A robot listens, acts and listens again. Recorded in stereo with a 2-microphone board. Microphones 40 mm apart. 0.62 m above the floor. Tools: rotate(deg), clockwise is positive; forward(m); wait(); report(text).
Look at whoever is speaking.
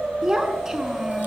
rotate(15)
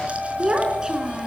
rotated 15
rotate(20)
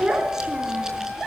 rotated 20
rotate(35)
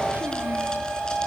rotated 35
wait()
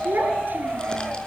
rotate(125)
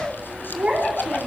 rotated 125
rotate(25)
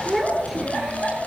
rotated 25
report("Found it: a child speaking, straight ahead, over 4 m away.")